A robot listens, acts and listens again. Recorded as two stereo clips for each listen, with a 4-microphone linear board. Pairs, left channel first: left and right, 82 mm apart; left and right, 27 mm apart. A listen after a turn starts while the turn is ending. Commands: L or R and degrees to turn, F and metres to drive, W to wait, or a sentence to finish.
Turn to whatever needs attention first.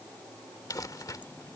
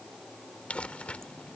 W
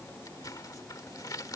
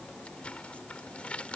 W
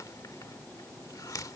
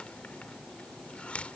I can't make out anything urgent to turn to.